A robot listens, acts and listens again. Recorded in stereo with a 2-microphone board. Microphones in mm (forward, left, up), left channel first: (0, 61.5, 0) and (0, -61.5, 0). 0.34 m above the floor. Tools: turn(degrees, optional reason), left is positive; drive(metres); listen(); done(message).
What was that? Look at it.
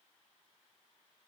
listen()
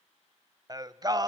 turn(degrees=-30, reason="The singing: about 30° right or 150° right.")
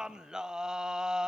done("Facing the singing.")